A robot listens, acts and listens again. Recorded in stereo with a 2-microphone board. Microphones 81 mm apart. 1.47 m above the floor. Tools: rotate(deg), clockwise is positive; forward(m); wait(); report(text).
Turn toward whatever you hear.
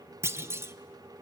rotate(30)
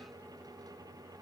wait()
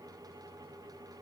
report("I heard a clunk, but can't make it out now. It was about straight ahead or 120° right.")